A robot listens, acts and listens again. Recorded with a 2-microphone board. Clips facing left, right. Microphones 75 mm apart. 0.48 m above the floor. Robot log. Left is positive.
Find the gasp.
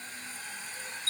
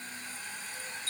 cmd idle
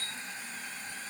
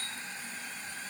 cmd idle
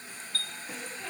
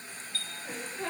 note: The gasp: about 45° right or 135° right.
cmd yaw -45
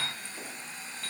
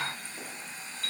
cmd idle
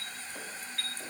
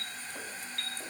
end: I heard a gasp, but can't make it out now. It was about straight ahead or 90° right.